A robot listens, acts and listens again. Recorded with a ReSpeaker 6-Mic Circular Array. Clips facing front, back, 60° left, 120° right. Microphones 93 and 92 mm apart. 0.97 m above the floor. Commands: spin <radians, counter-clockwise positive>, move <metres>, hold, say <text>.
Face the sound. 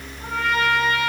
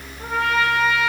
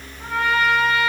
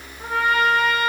spin 3.14
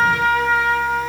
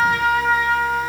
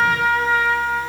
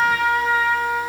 spin 0.17
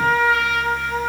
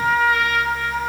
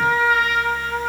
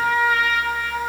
say Found it: a trumpet, straight ahead, 2 to 4 m away.